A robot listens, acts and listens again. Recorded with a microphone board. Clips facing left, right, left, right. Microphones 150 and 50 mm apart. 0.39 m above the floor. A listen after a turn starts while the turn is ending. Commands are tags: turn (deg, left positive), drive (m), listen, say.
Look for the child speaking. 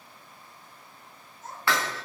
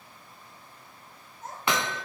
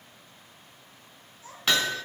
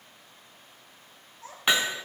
<turn deg="-65"/>
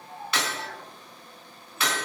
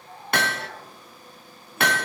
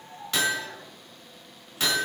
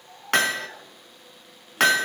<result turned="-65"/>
<listen/>
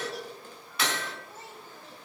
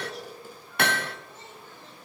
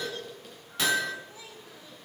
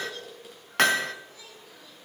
<turn deg="10"/>
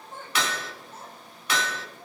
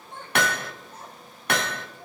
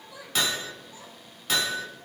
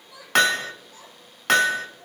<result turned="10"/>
<say>Facing the child speaking, over 4 m away.</say>